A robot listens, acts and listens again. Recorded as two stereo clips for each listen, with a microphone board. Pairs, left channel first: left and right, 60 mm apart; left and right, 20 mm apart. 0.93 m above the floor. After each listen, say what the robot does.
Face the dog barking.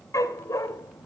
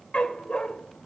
Turn 65° left.
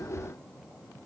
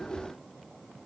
Keep listening.
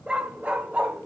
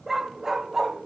Turn 25° right.
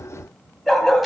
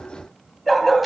Found it: a dog barking, straight ahead, 2 to 4 m away.